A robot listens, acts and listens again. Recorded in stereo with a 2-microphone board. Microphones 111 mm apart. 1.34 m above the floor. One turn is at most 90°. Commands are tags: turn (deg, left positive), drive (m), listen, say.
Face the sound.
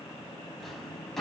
<turn deg="30"/>
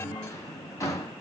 <turn deg="90"/>
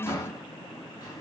<turn deg="40"/>
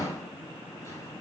<turn deg="35"/>
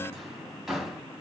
<say>Facing the drawer, 2 to 4 m away.</say>